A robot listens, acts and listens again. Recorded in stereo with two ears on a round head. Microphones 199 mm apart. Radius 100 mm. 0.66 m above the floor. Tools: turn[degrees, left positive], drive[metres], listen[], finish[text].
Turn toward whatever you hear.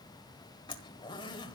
Thought: The zipper: about 20° left or 160° left.
Action: turn[20]
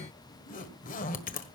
Thought: So it is at 140° left.
Action: turn[140]
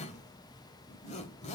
Thought: The zipper is now 30° left.
Action: turn[30]
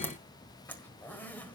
Thought: The zipper is now 10° left.
Action: turn[10]
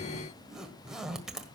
Action: finish[Found it: a zipper, straight ahead.]